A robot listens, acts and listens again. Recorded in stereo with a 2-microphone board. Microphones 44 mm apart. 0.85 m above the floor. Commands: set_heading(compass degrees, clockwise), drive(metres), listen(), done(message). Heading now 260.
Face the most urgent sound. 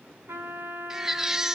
set_heading(290)
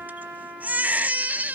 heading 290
set_heading(70)
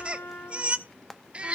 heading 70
set_heading(100)
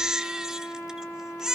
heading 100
set_heading(115)
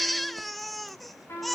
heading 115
done("Facing the baby crying, under 1 m away.")